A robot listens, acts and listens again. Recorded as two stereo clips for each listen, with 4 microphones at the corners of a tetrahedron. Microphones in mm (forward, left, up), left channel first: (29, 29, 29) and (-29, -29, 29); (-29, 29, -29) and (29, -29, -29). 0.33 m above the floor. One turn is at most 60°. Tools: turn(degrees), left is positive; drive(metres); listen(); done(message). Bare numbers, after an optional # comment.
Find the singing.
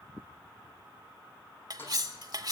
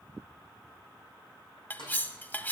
listen()
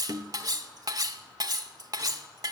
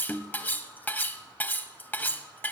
listen()
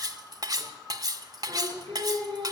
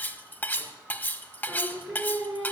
# The singing: 135° right.
turn(-60)
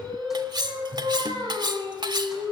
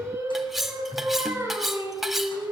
# The singing is now 105° right.
turn(-60)
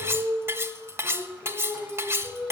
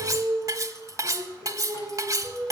# The singing is now 55° right.
turn(-55)
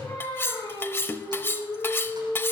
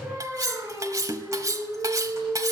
# The singing is now 15° left.
turn(15)
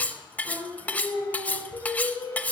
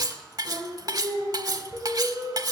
done("Facing the singing.")